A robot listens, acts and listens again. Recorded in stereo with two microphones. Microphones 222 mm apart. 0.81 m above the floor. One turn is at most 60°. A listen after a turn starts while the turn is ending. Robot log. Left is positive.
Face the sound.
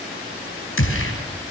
note: The gunshot: about 65° left or 115° left.
cmd yaw +60
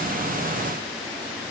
cmd idle
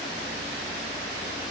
end: I heard a gunshot, but can't make it out now. It was about 5° left or 55° left.